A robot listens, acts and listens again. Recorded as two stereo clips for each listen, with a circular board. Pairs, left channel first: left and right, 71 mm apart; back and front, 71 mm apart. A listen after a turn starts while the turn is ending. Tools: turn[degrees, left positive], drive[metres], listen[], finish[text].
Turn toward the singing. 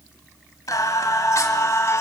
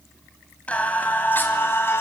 Thought: The singing: 130° left.
Action: turn[130]
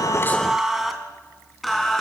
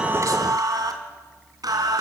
Action: finish[Facing the singing, 2 to 4 m away.]